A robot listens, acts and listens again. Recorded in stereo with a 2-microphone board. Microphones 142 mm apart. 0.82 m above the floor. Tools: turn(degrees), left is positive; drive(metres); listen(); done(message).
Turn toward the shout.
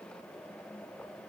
listen()
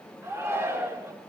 turn(degrees=-15)
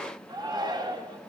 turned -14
turn(degrees=-150)
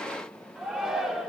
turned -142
done("Facing the shout, 2 to 4 m away.")